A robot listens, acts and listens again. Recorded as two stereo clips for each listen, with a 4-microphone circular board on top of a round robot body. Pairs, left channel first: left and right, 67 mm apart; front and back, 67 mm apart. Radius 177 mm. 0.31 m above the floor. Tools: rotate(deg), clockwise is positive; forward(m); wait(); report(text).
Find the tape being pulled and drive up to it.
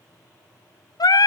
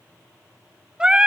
wait()
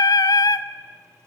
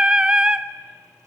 wait()
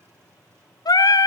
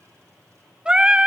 report("I can't make out tape being pulled to turn to.")